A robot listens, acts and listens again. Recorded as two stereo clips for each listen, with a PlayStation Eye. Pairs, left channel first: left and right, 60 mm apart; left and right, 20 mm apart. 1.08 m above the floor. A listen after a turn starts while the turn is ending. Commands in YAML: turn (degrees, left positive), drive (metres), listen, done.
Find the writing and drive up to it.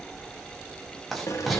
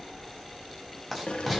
turn: 30
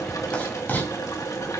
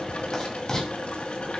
turn: 150
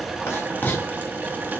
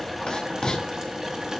turn: 35
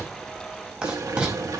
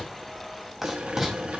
turn: -15
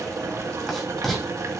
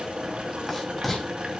drive: 1.0
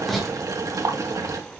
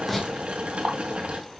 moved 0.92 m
drive: 1.0
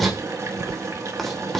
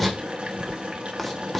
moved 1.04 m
drive: 1.0
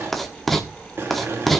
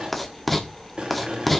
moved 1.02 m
drive: 1.0
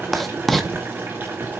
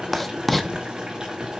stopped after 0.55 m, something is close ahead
done: "I am next to the writing."